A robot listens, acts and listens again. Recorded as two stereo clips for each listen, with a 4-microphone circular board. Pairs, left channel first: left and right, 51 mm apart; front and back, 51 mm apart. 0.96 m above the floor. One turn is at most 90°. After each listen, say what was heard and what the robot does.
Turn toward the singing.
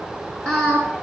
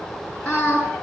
The singing: 65° right. Turn 65° right.
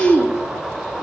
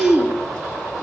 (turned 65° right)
Facing the singing, over 4 m away.